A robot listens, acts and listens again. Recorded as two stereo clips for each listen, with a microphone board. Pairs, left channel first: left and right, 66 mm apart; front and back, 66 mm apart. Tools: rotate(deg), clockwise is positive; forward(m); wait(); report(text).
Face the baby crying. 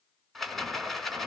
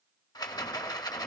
wait()
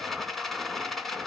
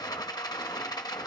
wait()
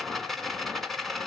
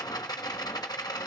report("I can't make out a baby crying, only a rattle.")